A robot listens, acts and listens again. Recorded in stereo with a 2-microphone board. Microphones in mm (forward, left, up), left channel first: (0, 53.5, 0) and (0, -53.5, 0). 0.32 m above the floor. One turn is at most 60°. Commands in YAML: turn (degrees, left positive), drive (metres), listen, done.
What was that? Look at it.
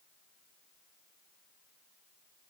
listen: true
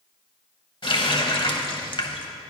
turn: 50
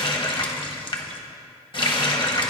turn: 60
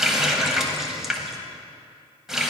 done: "Found it: a running tap, straight ahead, 1 to 2 m away."